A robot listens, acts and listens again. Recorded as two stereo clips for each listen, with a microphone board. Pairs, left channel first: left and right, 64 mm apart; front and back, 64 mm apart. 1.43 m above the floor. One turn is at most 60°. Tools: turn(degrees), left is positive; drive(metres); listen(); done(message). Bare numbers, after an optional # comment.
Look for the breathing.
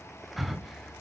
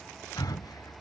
done("Found it: breathing, straight ahead.")